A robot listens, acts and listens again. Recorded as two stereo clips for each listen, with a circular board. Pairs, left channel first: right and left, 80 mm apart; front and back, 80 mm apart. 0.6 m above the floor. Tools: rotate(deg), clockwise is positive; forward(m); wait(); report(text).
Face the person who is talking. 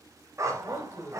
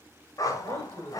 rotate(145)
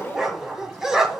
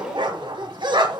wait()
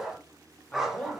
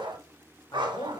rotate(15)
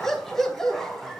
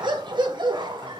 wait()
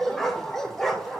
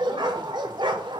wait()
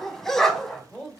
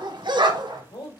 report("Facing the man speaking.")